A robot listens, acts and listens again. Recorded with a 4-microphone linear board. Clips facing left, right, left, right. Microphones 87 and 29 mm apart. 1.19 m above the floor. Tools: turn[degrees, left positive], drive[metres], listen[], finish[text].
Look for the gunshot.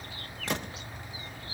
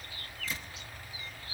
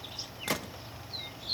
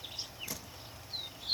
Thought: The gunshot: about 70° left or 110° left.
Action: turn[70]
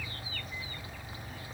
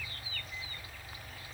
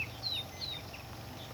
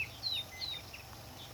Action: listen[]
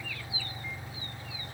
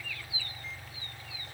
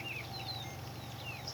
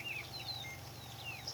Action: finish[I heard a gunshot, but can't make it out now. It was about straight ahead or 40° left.]